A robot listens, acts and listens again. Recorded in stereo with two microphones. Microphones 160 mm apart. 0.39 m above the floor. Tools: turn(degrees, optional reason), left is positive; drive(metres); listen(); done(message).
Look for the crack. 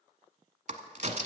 turn(degrees=-50, reason="The crack: about 50° right or 130° right.")
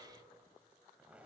listen()
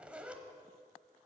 done("I heard a crack, but can't make it out now. It was about straight ahead or 80° right.")